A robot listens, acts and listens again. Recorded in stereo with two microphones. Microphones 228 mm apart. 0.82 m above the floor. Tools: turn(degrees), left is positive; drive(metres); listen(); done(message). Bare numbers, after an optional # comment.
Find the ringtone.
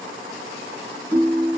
# The ringtone: about 20° left or 160° left.
turn(20)
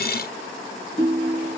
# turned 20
# So it is at 140° left.
turn(140)
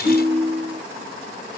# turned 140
# The ringtone is now 60° left.
turn(60)
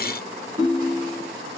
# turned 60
# The ringtone is now 20° right.
turn(-20)
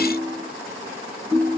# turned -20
done("Found it: a ringtone, straight ahead, 2 to 4 m away.")